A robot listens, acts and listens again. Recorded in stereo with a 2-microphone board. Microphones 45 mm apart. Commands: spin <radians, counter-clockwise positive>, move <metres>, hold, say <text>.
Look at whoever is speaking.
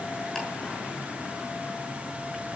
hold
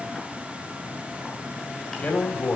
spin 0.44
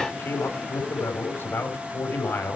spin 2.18
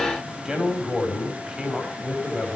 spin -0.26
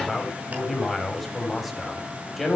say Found it: a man speaking, straight ahead.